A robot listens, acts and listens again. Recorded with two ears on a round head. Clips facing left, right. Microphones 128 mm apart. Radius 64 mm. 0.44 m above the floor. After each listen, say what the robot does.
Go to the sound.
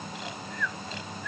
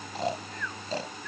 Turn 35° right.
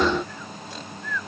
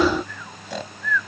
Turn 105° right.
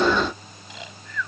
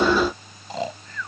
Turn 35° right.
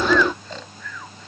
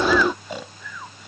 Turn 10° right.
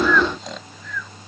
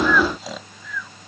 Drive 1.0 m forward.
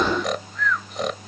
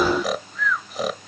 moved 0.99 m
Drive 1.0 m forward.
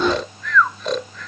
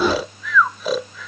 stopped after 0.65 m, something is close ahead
I am next to the snoring.